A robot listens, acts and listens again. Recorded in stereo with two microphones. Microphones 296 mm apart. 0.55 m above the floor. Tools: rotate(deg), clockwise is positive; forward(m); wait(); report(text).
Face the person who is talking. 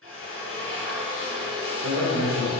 rotate(70)
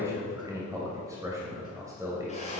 rotate(10)
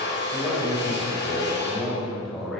report("Facing the man speaking, 2 to 4 m away.")